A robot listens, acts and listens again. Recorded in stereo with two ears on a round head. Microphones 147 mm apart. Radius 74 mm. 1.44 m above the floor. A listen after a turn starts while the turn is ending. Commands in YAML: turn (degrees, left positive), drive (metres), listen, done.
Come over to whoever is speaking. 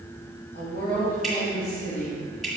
turn: 60
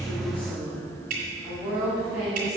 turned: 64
drive: 1.0
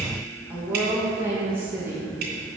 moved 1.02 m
turn: -15
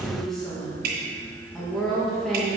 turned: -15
drive: 1.0
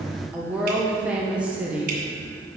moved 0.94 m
drive: 1.0
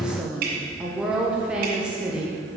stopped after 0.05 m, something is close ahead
done: "Arrived at the woman speaking, straight ahead."